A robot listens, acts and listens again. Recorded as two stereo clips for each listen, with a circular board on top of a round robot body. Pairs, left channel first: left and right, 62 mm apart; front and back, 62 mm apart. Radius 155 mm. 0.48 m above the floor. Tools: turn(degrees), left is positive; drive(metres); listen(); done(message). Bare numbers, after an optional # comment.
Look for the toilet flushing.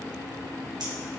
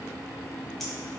listen()
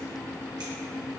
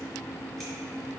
listen()
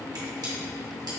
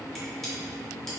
done("I can't make out a toilet flushing, only scissors.")